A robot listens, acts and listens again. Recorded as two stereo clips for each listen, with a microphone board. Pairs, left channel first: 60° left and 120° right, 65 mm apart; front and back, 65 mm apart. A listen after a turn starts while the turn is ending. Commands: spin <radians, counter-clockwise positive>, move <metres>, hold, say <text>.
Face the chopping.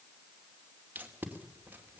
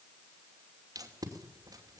hold
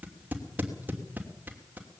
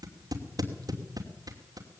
hold
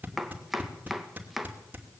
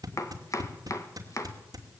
spin -0.61
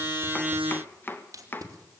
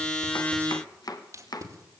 say Facing the chopping, 1 to 2 m away.